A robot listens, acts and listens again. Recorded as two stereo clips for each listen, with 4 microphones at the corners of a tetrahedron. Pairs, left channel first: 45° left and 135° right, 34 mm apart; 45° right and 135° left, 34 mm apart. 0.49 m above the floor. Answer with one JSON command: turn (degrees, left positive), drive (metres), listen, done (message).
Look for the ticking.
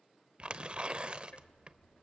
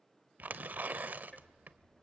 {"turn": 15}
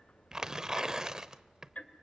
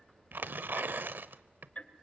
{"done": "Facing the ticking, 1 to 2 m away."}